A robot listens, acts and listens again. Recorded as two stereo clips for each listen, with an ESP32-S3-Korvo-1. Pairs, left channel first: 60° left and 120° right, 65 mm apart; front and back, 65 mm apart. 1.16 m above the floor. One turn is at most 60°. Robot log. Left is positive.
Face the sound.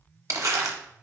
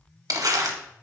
note: The crumpling: 155° right.
cmd yaw -60
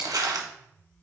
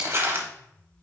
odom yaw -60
note: The crumpling is now 130° right.
cmd yaw -60
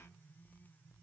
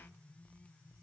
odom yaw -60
note: Nothing new. It was at 70° right.
cmd yaw -60
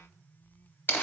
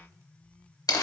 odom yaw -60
end: Found it: crumpling, straight ahead, under 1 m away.